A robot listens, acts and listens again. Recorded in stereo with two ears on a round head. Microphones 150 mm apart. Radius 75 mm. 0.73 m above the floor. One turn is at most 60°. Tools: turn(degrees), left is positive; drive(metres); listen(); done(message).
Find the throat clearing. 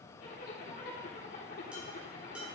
listen()
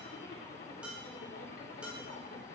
listen()
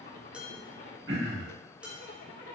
turn(degrees=-60)
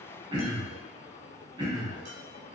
turn(degrees=-30)
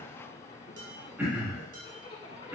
turn(degrees=-10)
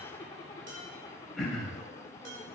done("Facing the throat clearing, 2 to 4 m away.")